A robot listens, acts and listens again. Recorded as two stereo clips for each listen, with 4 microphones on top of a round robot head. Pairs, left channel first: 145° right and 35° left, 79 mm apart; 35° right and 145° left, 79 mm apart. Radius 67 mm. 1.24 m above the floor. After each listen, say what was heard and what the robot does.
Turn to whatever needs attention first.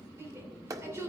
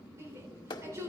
The shout: 90° left. Turn 90° left.
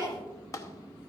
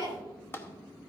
Facing the shout.